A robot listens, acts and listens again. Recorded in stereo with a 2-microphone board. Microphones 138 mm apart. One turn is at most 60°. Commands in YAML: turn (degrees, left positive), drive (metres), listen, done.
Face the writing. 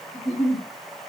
listen: true
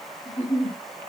listen: true
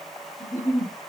done: "I can't make out writing to turn to."